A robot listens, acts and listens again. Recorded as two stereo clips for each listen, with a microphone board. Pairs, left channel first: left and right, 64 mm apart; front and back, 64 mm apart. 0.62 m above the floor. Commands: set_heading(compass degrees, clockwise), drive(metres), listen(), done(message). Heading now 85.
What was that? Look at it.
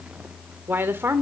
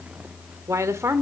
set_heading(225)
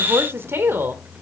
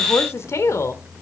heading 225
set_heading(260)
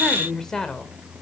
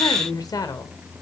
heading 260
set_heading(250)
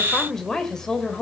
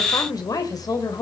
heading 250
set_heading(240)
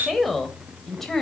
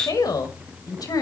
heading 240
done("Found it: a woman speaking, straight ahead, 2 to 4 m away.")